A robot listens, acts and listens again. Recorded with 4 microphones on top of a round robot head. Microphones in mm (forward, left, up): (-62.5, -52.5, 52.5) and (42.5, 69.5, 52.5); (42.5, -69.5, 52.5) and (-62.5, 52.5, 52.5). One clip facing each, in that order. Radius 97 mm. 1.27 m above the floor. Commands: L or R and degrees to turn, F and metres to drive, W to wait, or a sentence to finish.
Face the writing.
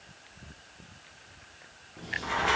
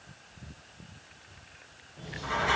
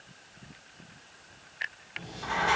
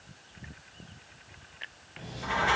R160
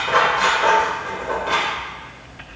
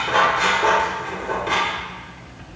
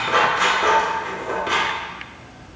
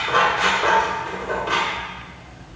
R35
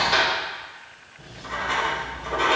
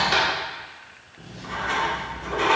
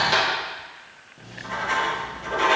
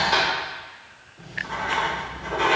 L10
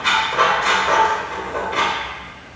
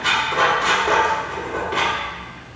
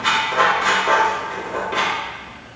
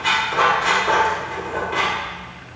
Found it: writing, straight ahead, 2 to 4 m away.